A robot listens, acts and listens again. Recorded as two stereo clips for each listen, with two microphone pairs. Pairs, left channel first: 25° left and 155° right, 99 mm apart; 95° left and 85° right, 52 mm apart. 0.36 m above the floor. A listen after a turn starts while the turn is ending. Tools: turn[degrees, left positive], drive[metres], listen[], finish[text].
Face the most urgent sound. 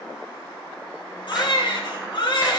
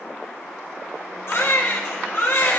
Thought: The baby crying: 60° left.
Action: turn[60]
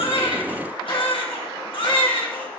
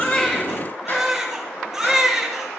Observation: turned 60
Action: finish[Found it: a baby crying, straight ahead.]